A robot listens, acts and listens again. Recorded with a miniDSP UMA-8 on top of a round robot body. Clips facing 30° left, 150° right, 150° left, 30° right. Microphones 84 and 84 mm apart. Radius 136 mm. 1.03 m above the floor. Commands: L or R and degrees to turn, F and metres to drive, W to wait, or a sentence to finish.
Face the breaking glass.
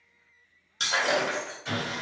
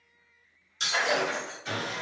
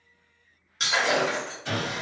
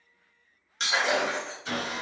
L65
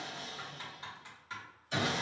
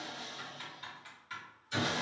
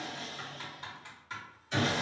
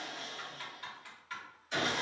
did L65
I heard breaking glass from this way, but can't make it out now.